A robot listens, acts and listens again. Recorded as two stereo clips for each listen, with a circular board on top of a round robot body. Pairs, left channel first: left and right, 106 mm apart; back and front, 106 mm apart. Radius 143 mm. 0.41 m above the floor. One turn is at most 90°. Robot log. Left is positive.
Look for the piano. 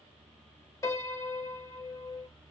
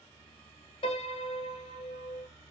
note: The piano: 150° left.
cmd yaw +90
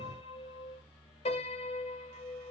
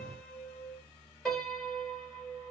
note: The piano is now 95° left.
cmd yaw +90
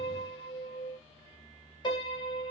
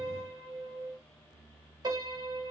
note: The piano is now 45° left.
cmd yaw +45
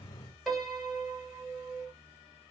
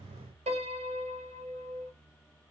end: Found it: a piano, straight ahead.